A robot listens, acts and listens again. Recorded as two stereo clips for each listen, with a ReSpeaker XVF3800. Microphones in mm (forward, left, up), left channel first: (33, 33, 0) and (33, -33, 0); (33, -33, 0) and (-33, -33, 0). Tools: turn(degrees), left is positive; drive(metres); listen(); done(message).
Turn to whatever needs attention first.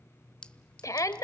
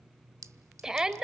turn(degrees=100)
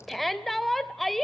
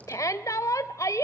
done("Facing the shout.")